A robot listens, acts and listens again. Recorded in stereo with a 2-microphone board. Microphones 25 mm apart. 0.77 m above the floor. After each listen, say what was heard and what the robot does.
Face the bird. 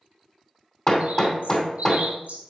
Turn 90° right.
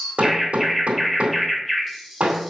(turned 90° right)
Facing the bird.